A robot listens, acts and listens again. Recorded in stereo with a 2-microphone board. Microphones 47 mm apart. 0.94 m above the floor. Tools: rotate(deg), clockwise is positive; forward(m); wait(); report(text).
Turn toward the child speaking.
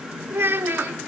rotate(55)
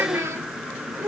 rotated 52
rotate(70)
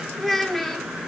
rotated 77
report("Found it: a child speaking, straight ahead.")